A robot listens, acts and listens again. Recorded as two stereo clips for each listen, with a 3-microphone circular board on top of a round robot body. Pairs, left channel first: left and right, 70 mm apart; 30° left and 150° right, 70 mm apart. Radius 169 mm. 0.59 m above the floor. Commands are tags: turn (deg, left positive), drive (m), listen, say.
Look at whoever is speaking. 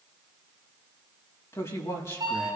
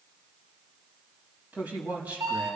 <turn deg="140"/>
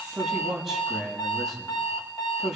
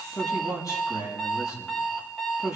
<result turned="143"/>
<say>Facing the man speaking.</say>